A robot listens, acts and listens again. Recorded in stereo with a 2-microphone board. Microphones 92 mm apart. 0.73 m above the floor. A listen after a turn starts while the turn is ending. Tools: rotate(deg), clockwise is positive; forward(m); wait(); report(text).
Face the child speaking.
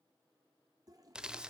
wait()
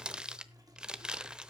wait()
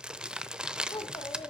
rotate(-60)
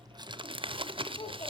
rotate(-70)
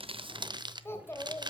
rotate(-25)
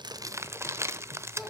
report("Found it: a child speaking, straight ahead.")